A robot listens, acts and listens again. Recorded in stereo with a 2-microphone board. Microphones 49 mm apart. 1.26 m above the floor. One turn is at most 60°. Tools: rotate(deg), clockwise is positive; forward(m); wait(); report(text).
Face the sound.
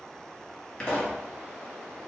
rotate(-30)
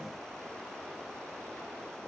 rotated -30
wait()
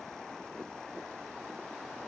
report("I heard a pop, but can't make it out now. It was about 15° right or 135° left.")